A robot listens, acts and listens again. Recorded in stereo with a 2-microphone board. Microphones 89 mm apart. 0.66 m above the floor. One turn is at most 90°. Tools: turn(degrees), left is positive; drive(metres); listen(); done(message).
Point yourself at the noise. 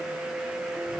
listen()
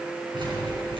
turn(degrees=-70)
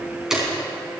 done("Facing the keys jangling.")